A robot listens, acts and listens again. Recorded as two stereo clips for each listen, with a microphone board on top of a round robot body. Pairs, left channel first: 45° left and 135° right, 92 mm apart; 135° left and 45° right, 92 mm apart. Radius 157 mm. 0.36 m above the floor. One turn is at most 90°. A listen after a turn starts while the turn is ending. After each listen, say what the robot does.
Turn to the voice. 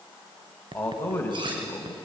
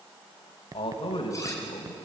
Turn 90° left.
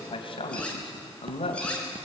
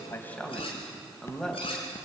Turn 50° left.
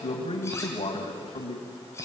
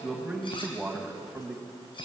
Turn 35° left.
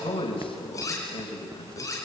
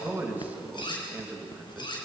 Turn 25° left.
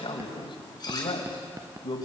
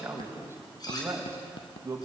Turn 15° left.
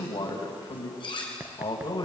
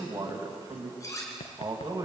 Found it: a man speaking, straight ahead, 2 to 4 m away.